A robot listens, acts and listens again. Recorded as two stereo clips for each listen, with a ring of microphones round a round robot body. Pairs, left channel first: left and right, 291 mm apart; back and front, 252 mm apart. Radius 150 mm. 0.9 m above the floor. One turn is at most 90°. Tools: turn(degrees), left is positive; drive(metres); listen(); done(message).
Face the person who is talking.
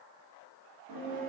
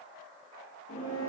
listen()
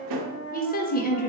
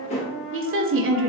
turn(degrees=30)
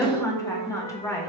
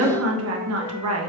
turn(degrees=10)
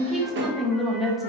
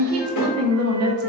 done("Facing the woman speaking, under 1 m away.")